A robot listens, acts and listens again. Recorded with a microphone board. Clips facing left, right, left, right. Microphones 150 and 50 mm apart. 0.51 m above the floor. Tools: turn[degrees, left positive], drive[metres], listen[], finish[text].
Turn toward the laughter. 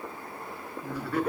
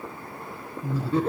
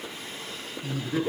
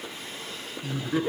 Thought: The laughter: about 25° right or 155° right.
Action: turn[-25]
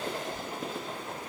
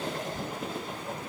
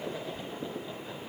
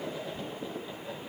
Action: listen[]
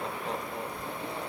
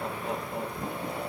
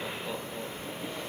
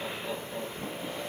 Action: finish[Found it: laughter, straight ahead, over 4 m away.]